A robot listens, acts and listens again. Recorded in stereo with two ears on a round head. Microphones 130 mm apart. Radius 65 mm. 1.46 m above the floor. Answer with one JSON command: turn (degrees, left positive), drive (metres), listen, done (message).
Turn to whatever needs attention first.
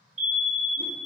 {"turn": -55}
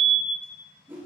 {"turn": -50}
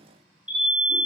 {"turn": -10}
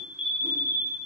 {"done": "Facing the fire alarm."}